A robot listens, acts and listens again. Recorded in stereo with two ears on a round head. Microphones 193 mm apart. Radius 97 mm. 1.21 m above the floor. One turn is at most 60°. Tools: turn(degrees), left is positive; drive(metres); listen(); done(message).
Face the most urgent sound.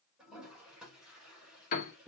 listen()
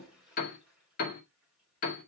listen()
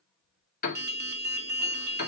turn(degrees=-50)
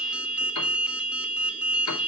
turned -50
done("Found it: an alarm, straight ahead, 1 to 2 m away.")